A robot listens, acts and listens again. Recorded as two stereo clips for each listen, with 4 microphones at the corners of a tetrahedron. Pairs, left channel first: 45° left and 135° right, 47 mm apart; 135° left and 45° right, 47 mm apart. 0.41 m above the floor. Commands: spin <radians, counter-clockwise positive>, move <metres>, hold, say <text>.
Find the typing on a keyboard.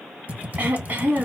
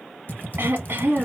spin 3.14
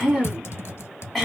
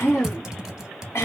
spin 0.52
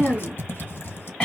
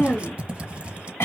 spin 0.26
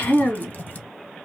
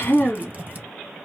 say Found it: typing on a keyboard, straight ahead, under 1 m away.